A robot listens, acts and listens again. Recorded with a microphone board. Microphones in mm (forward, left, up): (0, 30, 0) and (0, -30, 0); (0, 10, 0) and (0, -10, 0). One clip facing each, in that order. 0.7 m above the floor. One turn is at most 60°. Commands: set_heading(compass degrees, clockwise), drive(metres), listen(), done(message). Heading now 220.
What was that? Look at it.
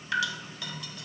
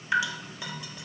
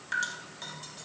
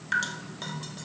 set_heading(240)
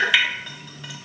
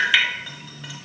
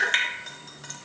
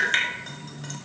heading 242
done("Found it: dripping, straight ahead, 1 to 2 m away.")